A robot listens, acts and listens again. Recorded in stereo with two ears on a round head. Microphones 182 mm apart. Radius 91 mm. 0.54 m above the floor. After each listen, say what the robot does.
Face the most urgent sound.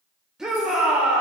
Turn 30° right.
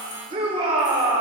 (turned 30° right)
Turn 150° right.
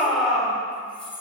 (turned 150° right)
Facing the shout.